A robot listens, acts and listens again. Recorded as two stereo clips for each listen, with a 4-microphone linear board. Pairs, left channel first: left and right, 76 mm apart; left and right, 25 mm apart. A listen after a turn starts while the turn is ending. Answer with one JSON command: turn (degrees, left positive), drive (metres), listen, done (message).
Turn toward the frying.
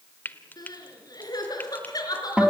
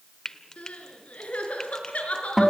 {"turn": 25}
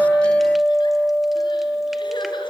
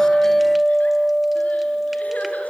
{"listen": true}
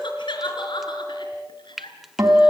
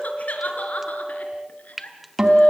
{"done": "Found it: frying, straight ahead."}